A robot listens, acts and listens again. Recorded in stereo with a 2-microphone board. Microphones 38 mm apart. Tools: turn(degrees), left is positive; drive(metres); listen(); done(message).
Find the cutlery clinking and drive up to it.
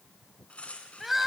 turn(degrees=35)
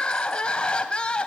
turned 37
listen()
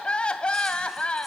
listen()
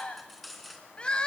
drive(metres=1.0)
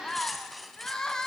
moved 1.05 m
drive(metres=1.0)
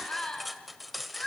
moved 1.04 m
drive(metres=1.0)
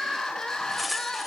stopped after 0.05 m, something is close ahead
done("I am next to the cutlery clinking.")